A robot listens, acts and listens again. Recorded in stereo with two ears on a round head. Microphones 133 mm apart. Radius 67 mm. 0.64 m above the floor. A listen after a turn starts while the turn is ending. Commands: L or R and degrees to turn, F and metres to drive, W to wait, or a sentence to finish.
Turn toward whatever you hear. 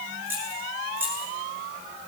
R30
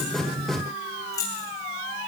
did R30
L20
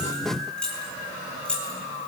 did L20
L10
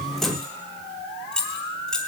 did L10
Facing the keys jangling, 2 to 4 m away.